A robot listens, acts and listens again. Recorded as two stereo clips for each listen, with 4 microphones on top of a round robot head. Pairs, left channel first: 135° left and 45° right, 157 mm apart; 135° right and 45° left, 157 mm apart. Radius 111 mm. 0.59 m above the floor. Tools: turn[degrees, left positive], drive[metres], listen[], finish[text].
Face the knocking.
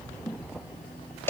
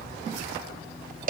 Action: listen[]
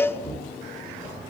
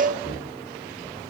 Thought: The knocking: 175° right.
Action: turn[-175]
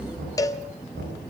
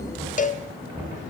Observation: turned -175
Thought: The knocking is now 35° right.
Action: turn[-35]
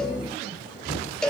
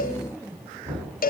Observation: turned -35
Thought: The knocking is now 20° right.
Action: turn[-20]
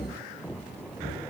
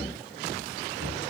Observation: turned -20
Action: finish[Found it: knocking, straight ahead.]